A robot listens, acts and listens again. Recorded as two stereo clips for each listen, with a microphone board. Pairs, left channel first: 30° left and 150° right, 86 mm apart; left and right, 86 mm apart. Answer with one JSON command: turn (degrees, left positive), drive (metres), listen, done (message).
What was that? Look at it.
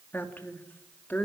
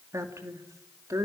{"turn": -40}
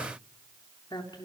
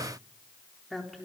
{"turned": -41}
{"done": "Found it: a woman speaking, straight ahead, 2 to 4 m away."}